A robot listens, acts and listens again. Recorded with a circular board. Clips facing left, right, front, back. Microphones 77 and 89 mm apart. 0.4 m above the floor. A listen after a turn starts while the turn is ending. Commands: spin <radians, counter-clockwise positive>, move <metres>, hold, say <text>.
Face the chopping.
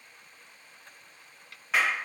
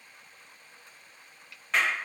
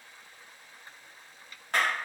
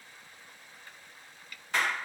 spin 0.96
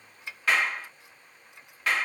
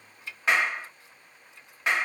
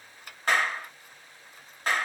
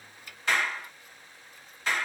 hold
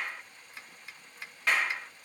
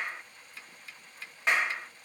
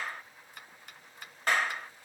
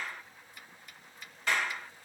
spin 0.35
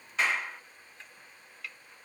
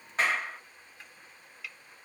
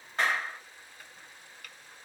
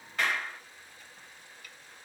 say Facing the chopping, 1 to 2 m away.